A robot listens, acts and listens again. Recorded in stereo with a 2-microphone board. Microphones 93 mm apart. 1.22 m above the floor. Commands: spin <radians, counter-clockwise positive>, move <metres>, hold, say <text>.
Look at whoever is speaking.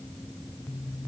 hold
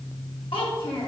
spin 1.22
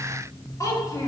spin 0.61
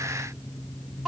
say Found it: a child speaking, straight ahead.